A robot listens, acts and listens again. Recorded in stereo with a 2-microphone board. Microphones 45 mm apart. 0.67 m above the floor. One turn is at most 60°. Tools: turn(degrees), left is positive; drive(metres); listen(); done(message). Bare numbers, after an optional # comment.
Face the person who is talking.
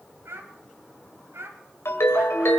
turn(-60)
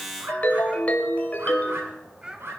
# So it is at 20° right.
turn(-20)
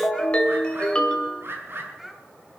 done("Found it: a child speaking, straight ahead, 2 to 4 m away.")